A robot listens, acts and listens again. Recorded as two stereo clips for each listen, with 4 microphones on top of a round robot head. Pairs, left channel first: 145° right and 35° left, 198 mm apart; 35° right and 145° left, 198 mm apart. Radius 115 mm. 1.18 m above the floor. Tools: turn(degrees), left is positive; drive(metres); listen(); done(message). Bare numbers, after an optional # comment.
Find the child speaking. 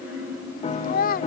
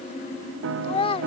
# The child speaking: 95° right.
turn(-95)
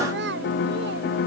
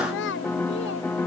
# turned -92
done("Found it: a child speaking, straight ahead.")